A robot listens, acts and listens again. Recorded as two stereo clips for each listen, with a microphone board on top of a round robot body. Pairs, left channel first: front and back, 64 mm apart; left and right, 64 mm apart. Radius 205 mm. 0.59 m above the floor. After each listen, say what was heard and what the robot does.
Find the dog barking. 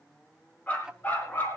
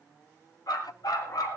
The dog barking: 60° left. Turn 60° left.
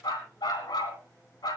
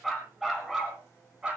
The dog barking is now 15° right. Turn 15° right.
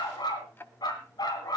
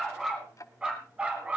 The dog barking is now 20° right. Turn 20° right.
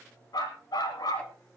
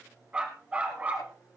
The dog barking is now 25° right. Turn 25° right.
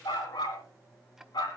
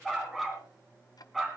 Found it: a dog barking, straight ahead, 2 to 4 m away.